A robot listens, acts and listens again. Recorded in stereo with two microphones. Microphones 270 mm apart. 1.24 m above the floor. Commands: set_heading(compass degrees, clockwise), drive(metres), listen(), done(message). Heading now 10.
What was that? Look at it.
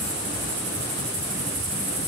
listen()
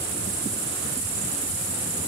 listen()
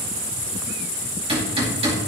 set_heading(30)
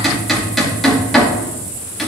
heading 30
done("Facing the hammering, 2 to 4 m away.")